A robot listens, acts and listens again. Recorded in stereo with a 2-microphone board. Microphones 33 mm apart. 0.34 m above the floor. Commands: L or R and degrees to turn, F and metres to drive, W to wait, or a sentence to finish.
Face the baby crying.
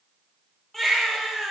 L30
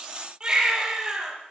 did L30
R25
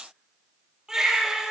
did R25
R15
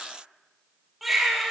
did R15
Found it: a baby crying, straight ahead.